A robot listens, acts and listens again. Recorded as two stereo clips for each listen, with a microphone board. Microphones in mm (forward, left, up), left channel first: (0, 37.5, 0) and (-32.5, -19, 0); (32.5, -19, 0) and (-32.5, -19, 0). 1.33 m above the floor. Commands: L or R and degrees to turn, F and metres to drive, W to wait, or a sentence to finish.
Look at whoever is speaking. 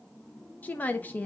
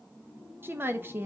L125
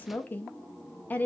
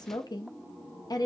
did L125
Facing the woman speaking, under 1 m away.